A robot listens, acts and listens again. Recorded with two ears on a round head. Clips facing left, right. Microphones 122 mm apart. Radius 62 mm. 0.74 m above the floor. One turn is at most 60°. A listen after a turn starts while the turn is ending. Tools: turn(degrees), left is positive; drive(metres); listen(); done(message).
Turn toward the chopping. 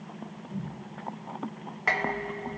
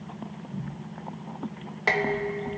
listen()
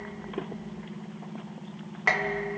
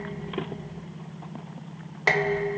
listen()
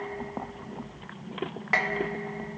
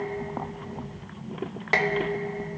done("I can't make out chopping, only dishes clattering.")